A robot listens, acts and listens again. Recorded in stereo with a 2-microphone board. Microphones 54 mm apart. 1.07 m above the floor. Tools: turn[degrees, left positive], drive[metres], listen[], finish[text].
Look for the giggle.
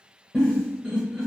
Action: turn[30]
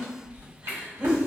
Thought: So it is at 25° right.
Action: turn[-25]
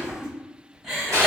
Thought: The giggle is now 10° right.
Action: turn[-10]
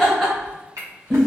Action: finish[Facing the giggle.]